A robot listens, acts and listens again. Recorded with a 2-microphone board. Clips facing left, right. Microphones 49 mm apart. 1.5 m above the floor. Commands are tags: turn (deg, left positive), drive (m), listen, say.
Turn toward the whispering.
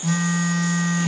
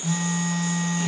<listen/>
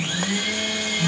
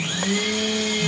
<listen/>
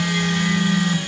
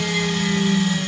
<say>I can't make out whispering, only a blender and a phone buzzing.</say>